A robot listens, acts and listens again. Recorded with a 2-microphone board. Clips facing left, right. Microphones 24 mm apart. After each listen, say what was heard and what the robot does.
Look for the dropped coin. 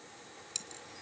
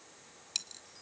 The dropped coin: about 30° right or 150° right. Turn 30° right.
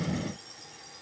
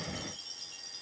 Keep listening.
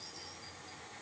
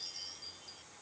I heard a dropped coin, but can't make it out now. It was about straight ahead or 120° right.